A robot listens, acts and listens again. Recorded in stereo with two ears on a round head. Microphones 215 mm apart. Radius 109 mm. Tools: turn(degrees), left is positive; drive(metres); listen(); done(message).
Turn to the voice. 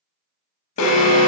listen()
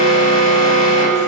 listen()
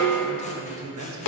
turn(degrees=-90)
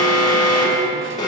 listen()
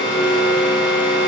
listen()
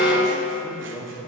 done("Found it: a man speaking, straight ahead.")